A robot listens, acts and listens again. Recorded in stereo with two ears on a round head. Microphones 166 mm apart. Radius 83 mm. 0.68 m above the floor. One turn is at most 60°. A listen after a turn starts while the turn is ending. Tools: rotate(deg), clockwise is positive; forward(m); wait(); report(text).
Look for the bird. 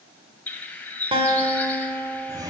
rotate(-30)
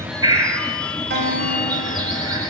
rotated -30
rotate(20)
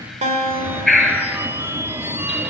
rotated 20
report("Facing the bird, 1 to 2 m away.")